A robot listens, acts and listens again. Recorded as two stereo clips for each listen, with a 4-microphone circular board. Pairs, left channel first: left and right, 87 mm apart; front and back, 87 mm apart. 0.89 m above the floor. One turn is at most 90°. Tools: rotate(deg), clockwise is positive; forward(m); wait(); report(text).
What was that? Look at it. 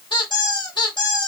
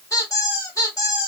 rotate(-55)
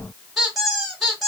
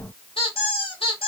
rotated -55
report("Facing the squeak, 1 to 2 m away.")